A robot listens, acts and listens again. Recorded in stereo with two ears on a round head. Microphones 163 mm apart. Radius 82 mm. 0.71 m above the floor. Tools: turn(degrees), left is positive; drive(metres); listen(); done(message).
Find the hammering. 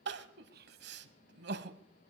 listen()
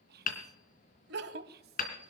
turn(degrees=50)
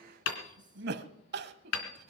turn(degrees=85)
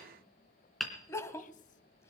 done("Facing the hammering, 2 to 4 m away.")